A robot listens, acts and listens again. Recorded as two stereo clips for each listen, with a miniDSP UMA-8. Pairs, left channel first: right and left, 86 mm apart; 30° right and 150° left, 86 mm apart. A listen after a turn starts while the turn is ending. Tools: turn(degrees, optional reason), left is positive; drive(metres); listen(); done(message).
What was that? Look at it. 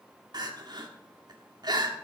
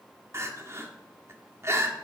turn(degrees=100, reason="The crying: 100° left.")
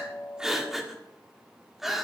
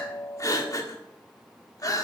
done("Facing the crying.")